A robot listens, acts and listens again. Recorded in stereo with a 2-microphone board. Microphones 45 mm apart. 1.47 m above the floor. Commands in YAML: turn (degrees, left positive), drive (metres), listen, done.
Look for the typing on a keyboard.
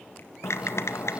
turn: 75
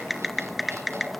done: "Facing the typing on a keyboard, 1 to 2 m away."